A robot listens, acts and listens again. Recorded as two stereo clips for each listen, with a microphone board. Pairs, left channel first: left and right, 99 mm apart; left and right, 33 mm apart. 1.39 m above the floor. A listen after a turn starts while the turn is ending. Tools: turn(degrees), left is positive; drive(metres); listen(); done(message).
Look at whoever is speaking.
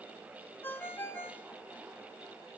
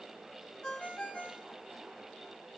listen()
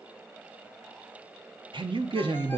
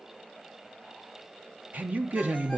turn(degrees=-55)
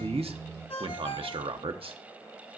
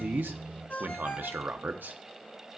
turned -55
turn(degrees=-70)
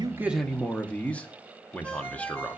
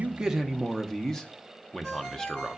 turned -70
turn(degrees=15)
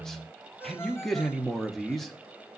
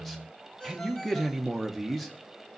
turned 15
done("Facing the man speaking.")